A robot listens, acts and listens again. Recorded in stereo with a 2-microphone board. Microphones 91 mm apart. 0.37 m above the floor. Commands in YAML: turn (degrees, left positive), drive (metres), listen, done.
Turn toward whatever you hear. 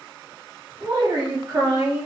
turn: -40
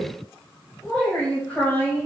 turn: 20
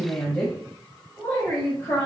turn: 25
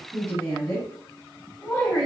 turn: 10
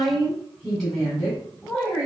done: "Found it: a woman speaking, straight ahead, 1 to 2 m away."